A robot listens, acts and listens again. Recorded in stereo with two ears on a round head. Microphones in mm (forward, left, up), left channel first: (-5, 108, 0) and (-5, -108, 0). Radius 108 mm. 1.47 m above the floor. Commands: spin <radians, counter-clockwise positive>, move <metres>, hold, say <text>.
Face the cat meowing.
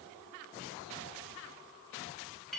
hold
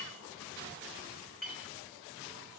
hold
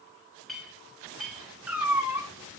spin -0.52
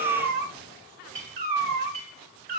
spin -2.44
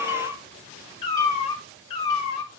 spin 0.44
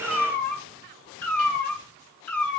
spin 0.17
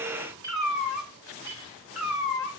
say Facing the cat meowing.